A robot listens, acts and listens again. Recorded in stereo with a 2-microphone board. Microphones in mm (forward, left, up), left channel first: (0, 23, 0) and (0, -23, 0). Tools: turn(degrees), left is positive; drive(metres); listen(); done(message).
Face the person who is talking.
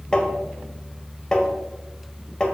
listen()
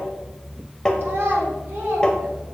turn(degrees=-50)
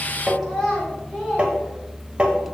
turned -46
done("Found it: a child speaking, straight ahead, over 4 m away.")